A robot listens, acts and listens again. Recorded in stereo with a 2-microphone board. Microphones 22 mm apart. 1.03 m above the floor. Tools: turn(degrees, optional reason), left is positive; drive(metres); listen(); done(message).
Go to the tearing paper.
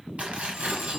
turn(degrees=-70, reason="The tearing paper: about 70° right or 110° right.")
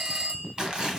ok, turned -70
turn(degrees=-35, reason="So it is at 35° right.")
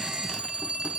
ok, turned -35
listen()
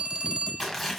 drive(metres=1.0)
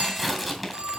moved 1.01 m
drive(metres=1.0)
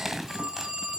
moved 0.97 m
turn(degrees=-15, reason="The tearing paper is now 15° right.")
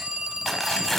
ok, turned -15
drive(metres=1.0)
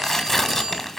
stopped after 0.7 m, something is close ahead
turn(degrees=15, reason="The tearing paper is now 15° left.")
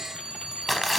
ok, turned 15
done("I am next to the tearing paper.")